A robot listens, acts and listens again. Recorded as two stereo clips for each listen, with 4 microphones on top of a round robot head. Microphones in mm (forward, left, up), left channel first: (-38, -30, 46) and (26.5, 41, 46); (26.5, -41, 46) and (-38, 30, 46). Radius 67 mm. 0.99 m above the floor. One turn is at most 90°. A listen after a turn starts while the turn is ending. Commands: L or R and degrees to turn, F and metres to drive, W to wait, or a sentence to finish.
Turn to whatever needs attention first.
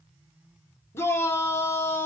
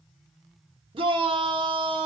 L90
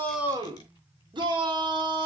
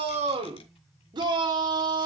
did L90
L85
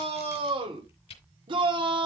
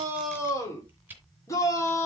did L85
L10
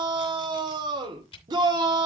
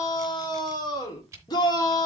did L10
Facing the shout, 2 to 4 m away.